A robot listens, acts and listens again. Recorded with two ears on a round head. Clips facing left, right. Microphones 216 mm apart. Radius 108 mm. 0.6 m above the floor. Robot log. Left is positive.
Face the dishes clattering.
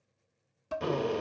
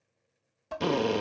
cmd yaw +30
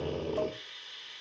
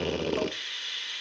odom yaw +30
cmd idle
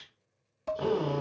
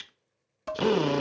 note: So it is at 20° right.
cmd yaw -20
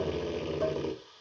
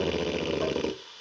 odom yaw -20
cmd idle
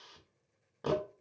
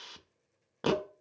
end: Found it: dishes clattering, straight ahead.